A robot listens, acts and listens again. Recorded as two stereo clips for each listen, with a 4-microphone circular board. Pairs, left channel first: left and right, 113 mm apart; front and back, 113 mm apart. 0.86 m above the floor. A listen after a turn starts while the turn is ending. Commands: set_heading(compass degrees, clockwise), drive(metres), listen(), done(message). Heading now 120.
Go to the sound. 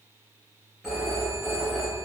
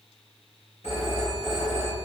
drive(1.0)
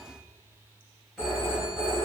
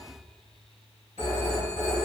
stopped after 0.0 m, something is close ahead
done("Blocked. The phone ringing is further on, straight ahead.")